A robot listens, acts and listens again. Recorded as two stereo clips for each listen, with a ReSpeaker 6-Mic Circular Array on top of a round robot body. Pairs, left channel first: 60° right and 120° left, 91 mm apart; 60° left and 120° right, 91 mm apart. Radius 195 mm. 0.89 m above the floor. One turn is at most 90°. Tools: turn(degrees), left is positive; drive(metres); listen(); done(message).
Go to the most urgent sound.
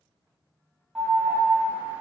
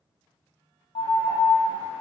turn(degrees=40)
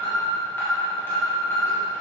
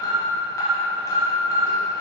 drive(metres=1.0)
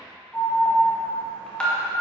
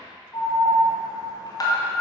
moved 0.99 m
turn(degrees=15)
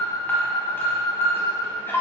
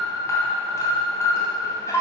drive(metres=1.0)
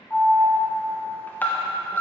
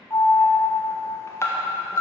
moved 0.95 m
drive(metres=1.0)
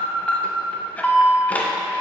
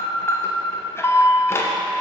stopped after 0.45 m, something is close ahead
turn(degrees=10)
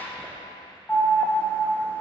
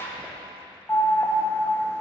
done("Arrived at the alarm, straight ahead.")